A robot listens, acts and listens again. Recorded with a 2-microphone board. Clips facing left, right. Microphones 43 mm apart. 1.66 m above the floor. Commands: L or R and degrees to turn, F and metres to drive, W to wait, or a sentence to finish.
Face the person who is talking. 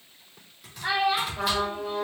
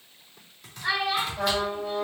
L30
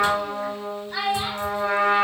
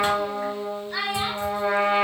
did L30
Found it: a child speaking, straight ahead.